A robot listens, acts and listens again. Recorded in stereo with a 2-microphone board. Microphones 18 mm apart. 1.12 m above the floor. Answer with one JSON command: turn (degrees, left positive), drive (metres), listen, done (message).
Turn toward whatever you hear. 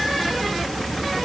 {"listen": true}
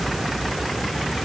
{"listen": true}
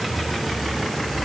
{"done": "I can't make out anything to turn to."}